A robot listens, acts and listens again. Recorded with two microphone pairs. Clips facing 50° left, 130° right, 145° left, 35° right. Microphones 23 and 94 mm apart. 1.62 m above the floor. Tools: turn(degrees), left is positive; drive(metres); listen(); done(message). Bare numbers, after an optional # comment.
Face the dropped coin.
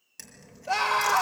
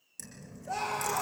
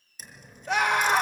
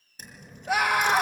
done("Found it: a dropped coin, straight ahead, over 4 m away.")